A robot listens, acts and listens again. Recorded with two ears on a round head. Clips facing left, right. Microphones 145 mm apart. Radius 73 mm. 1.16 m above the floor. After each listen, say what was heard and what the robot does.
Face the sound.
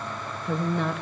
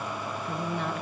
The woman speaking: about 65° left or 115° left. Turn 65° left.
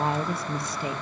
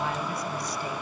So it is at 15° left. Turn 15° left.
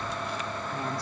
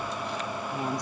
The woman speaking is now 15° right. Turn 15° right.
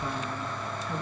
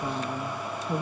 The woman speaking is now 25° right. Turn 25° right.
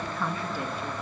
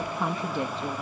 The woman speaking is now 20° right. Turn 20° right.
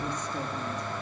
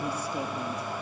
Keep listening.
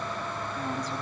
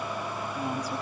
The woman speaking is now 10° right. Turn 10° right.
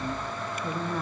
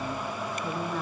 Facing the woman speaking, 2 to 4 m away.